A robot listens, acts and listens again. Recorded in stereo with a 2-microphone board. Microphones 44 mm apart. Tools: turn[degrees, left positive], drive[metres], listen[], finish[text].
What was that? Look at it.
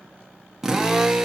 Action: turn[-30]
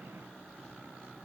Action: listen[]
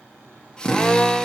Thought: So it is at 15° left.
Action: turn[15]
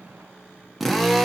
Action: finish[Facing the drill, under 1 m away.]